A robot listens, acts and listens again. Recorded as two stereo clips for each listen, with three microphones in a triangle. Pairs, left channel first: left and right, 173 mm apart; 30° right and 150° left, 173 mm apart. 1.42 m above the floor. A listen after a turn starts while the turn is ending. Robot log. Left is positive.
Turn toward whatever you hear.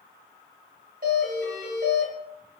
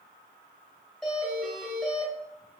note: The doorbell: 115° right.
cmd yaw -115
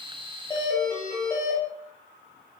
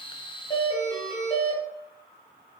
note: The doorbell is now 15° left.
cmd yaw +15
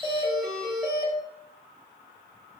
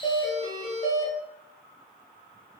note: The doorbell is now 10° left.
cmd yaw +10
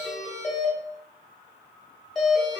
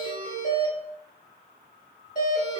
end: Facing the doorbell, 1 to 2 m away.